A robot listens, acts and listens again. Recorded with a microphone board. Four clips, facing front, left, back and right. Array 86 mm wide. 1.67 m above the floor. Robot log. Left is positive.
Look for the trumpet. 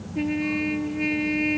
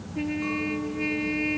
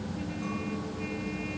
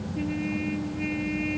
note: The trumpet: 15° left.
cmd yaw +15
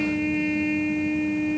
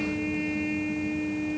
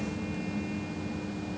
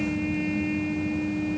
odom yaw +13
end: Facing the trumpet.